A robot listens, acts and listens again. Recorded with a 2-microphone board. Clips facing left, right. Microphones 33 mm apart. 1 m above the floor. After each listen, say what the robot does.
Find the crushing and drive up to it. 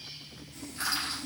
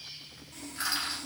Turn 20° right.
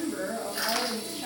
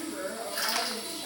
Drive 1.0 m forward.
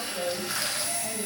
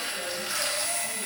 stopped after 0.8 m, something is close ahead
Keep listening.
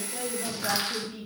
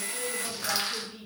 I am next to the crushing.